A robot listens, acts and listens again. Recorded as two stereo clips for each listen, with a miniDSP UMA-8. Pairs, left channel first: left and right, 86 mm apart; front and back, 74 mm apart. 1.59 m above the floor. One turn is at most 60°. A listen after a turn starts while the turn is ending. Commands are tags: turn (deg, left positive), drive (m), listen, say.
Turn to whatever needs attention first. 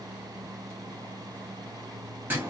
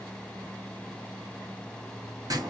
<listen/>
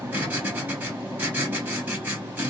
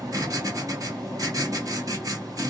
<listen/>
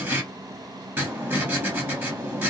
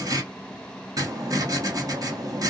<say>I can't make out anything urgent to turn to.</say>